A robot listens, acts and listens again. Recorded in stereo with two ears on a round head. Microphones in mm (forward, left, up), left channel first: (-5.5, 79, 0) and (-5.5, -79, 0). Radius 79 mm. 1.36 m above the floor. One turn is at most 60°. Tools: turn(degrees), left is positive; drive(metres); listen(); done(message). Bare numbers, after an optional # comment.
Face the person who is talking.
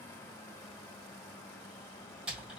listen()
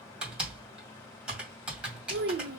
# The child speaking: about 65° right or 115° right.
turn(-60)
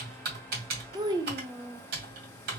# So it is at 25° right.
turn(-25)
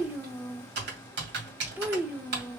# The child speaking is now 10° right.
turn(-10)
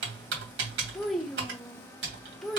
done("Found it: a child speaking, straight ahead, under 1 m away.")